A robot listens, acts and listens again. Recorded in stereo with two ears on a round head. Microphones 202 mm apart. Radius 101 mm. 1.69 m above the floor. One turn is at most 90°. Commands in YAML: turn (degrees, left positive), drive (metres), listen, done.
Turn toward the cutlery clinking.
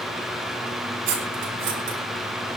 turn: -55
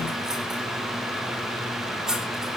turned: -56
done: "Found it: cutlery clinking, straight ahead, 2 to 4 m away."